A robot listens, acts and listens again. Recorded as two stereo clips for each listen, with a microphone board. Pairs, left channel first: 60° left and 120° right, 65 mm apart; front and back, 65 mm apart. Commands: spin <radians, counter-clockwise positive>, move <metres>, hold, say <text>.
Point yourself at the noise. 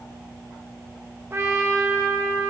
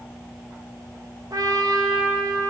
spin -2.97
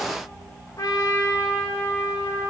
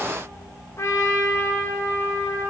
spin 0.70
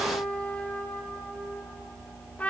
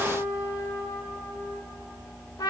say Facing the trumpet, 2 to 4 m away.